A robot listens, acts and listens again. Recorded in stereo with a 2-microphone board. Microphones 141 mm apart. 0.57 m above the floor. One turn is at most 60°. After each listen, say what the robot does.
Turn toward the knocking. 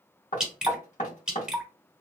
Turn 55° left.
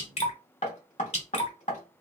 Turn 60° left.
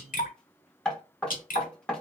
Found it: knocking, straight ahead, under 1 m away.